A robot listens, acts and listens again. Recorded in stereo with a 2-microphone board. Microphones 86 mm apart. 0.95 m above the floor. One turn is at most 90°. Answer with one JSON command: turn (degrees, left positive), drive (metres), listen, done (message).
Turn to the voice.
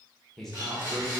{"turn": 30}
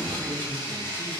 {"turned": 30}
{"listen": true}
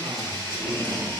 {"listen": true}
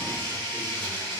{"done": "I heard a man speaking, but can't make it out now. It was about 25° right or 145° left."}